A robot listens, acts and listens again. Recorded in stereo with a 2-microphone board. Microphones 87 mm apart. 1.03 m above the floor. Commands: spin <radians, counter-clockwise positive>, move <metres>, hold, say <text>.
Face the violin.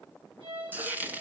spin -1.31
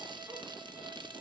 hold
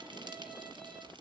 hold
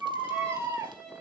say Facing the violin.